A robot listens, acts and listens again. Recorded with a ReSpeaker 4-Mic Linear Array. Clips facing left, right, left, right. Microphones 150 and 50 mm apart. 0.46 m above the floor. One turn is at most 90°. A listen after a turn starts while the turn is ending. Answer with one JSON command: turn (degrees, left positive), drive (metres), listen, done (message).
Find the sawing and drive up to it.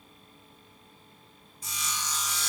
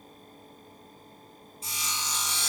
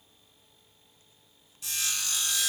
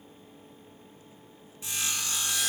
{"turn": -25}
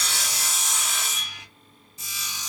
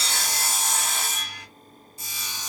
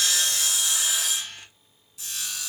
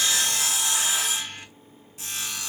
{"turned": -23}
{"turn": -90}
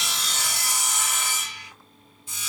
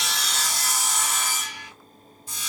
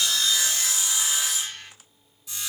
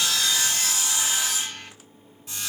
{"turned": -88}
{"turn": -45}
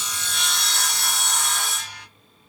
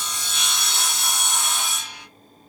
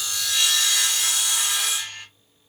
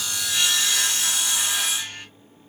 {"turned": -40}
{"drive": 1.0}
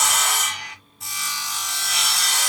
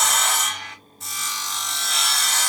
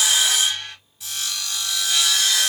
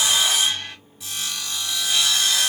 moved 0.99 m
{"drive": 1.0}
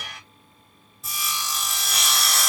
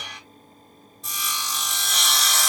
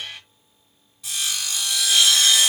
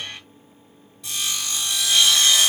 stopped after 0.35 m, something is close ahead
{"done": "I am next to the sawing."}